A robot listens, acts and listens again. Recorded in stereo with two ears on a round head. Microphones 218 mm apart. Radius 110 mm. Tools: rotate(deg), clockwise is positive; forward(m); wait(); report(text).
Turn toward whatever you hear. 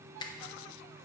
rotate(-15)
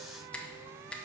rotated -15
report("Found it: a finger snap, straight ahead, under 1 m away.")